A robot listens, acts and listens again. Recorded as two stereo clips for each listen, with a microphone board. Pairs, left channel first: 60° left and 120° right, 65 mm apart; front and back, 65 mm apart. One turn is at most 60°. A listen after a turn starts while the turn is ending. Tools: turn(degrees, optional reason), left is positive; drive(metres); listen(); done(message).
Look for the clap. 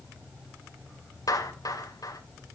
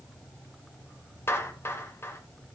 turn(degrees=50, reason="The clap: 50° left.")
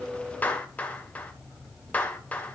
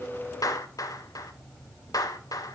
done("Facing the clap.")